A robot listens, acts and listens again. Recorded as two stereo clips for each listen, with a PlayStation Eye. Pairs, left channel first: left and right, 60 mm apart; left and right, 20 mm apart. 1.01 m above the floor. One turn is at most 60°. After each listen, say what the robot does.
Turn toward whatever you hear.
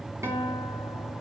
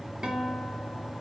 Turn 50° right.
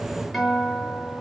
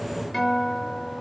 Found it: a guitar, straight ahead, 2 to 4 m away.